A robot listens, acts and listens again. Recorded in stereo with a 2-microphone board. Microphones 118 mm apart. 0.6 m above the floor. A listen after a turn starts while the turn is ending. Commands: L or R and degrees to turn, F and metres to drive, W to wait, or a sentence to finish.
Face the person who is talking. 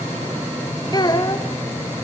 L35
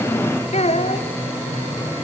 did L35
L105
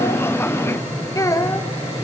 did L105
L30
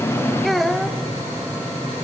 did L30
Found it: a child speaking, straight ahead, 1 to 2 m away.